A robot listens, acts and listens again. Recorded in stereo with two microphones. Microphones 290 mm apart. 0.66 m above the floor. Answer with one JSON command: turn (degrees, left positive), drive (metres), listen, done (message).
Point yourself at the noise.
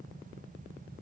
{"listen": true}
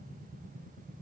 {"listen": true}
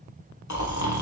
{"turn": 75}
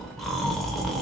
{"done": "Facing the snoring, under 1 m away."}